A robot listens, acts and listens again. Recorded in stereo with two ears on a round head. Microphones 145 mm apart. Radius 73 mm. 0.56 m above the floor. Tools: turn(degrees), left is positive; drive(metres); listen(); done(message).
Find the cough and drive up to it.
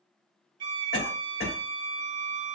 turn(degrees=65)
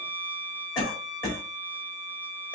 turn(degrees=30)
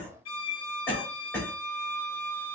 turn(degrees=15)
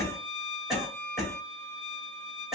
drive(metres=1.0)
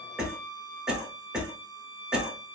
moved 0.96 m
drive(metres=1.0)
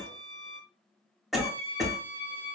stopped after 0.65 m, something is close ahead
done("Arrived at the cough, straight ahead.")